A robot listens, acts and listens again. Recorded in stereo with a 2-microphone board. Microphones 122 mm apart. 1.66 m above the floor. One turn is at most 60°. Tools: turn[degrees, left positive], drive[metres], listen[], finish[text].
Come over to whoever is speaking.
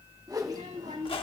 Action: turn[-60]
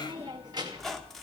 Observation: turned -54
Thought: So it is at 35° right.
Action: turn[-35]
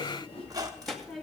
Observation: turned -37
Action: drive[1.0]
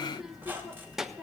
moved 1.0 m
Action: drive[1.0]
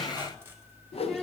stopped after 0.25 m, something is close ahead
Action: finish[Arrived at the child speaking, straight ahead.]